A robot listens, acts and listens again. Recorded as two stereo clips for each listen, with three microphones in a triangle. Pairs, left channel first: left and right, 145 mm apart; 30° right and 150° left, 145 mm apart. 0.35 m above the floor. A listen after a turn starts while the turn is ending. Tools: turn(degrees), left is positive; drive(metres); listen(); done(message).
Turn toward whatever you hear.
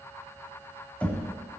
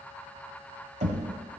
turn(degrees=170)
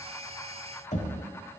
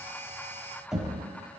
turn(degrees=65)
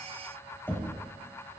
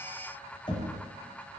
turn(degrees=15)
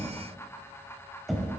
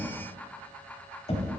done("Facing the knocking, 1 to 2 m away.")